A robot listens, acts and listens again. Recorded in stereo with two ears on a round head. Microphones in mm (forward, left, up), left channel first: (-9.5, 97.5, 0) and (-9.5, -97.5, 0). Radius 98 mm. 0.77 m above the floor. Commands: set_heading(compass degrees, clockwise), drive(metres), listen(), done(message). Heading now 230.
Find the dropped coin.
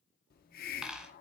set_heading(260)
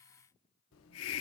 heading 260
listen()
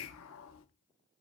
done("I heard a dropped coin, but can't make it out now. It was about 25° left or 145° right.")